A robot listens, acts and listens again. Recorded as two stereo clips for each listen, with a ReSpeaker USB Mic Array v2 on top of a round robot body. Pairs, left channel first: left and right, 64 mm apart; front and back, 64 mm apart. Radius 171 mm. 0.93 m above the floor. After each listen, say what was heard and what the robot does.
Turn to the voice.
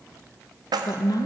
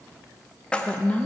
The woman speaking: 70° left. Turn 70° left.
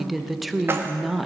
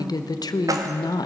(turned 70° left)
Facing the woman speaking.